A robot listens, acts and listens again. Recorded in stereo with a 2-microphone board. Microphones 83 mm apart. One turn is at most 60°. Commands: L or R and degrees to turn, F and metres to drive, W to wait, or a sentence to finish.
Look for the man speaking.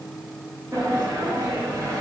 W
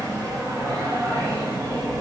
W
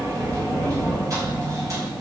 I can't make out a man speaking to turn to.